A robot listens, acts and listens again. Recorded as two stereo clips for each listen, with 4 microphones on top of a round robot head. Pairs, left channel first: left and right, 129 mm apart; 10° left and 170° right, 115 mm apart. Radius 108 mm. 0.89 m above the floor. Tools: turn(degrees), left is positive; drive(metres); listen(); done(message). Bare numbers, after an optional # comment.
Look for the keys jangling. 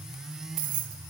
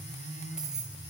# The keys jangling: 85° right.
turn(-85)
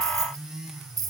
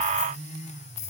# The keys jangling is now 30° right.
turn(-30)
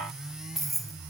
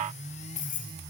done("Facing the keys jangling, 2 to 4 m away.")